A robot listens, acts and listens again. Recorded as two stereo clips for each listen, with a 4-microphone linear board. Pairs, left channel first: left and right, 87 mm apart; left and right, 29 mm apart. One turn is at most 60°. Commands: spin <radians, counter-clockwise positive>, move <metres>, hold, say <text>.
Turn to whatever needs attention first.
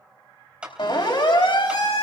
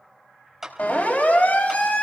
spin 1.05
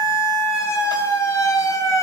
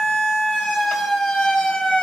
spin 0.70
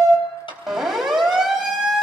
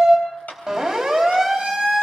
say Facing the siren.